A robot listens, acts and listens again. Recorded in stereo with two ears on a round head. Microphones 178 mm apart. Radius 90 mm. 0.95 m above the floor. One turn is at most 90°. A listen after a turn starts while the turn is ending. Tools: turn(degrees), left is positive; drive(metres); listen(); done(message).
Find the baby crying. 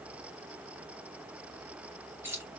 listen()
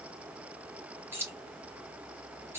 listen()
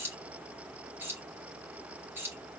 done("I can't make out a baby crying, only keys jangling.")